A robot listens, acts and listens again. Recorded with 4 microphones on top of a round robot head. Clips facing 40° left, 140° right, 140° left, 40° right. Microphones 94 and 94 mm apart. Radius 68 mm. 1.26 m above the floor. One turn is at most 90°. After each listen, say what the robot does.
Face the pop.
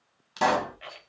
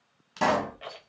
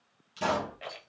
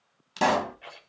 Turn 40° right.
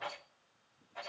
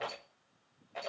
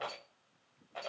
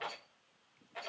Facing where the pop came from. I can't hear it now.